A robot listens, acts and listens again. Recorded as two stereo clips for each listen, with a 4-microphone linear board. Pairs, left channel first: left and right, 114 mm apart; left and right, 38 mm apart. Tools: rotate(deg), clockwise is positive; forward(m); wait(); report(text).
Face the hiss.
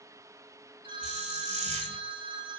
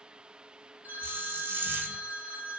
rotate(90)
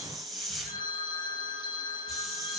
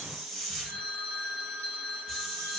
report("Facing the hiss, 2 to 4 m away.")